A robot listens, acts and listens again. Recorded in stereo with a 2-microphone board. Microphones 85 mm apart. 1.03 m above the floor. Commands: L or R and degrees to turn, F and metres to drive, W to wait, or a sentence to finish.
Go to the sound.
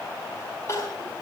L35
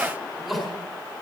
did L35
F1.0
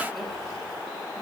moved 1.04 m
W
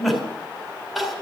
F1.0
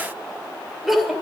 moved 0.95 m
F1.0
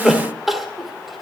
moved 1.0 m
F1.0
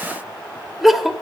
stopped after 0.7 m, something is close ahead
I am next to the crying.